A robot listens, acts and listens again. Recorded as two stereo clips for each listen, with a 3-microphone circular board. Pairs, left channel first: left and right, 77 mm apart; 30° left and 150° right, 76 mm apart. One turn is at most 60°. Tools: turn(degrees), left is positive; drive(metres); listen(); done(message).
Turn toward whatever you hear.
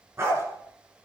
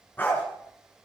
turn(degrees=-35)
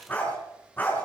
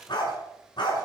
turn(degrees=25)
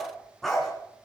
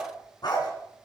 done("Found it: a dog barking, straight ahead, 2 to 4 m away.")